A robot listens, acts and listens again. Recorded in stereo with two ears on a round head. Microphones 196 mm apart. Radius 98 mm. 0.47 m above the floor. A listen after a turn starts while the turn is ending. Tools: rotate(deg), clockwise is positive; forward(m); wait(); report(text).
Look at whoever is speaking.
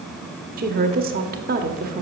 rotate(45)
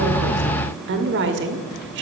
rotate(80)
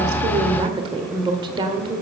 rotate(25)
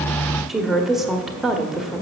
report("Facing the woman speaking, 1 to 2 m away.")